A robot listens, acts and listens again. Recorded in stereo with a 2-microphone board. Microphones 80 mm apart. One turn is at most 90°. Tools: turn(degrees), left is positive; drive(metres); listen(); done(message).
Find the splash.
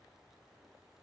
listen()
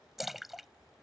turn(degrees=30)
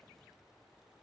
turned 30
listen()
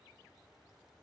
done("I heard a splash, but can't make it out now. It was about 30° right or 150° left.")